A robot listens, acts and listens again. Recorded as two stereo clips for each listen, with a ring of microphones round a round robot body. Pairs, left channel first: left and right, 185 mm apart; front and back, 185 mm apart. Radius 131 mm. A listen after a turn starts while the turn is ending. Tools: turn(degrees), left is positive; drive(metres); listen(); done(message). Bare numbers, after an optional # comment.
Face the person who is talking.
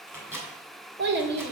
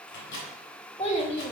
# The child speaking: 70° right.
turn(-70)
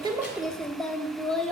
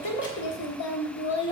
done("Found it: a child speaking, straight ahead, 1 to 2 m away.")